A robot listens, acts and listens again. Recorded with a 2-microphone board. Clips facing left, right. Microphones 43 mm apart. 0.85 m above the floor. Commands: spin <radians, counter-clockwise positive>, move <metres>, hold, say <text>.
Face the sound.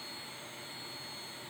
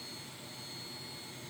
hold
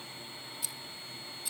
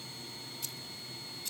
spin 0.52
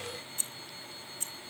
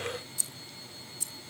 spin 2.44
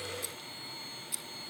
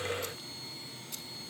say Found it: keys jangling, straight ahead.